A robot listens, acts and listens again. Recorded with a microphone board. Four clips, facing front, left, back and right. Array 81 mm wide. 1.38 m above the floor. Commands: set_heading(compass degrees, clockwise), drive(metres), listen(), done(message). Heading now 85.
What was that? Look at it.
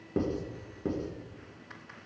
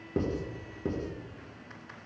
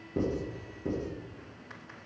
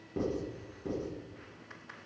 set_heading(35)
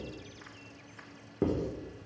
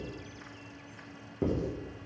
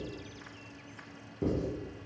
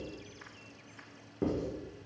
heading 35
done("Facing the writing, 2 to 4 m away.")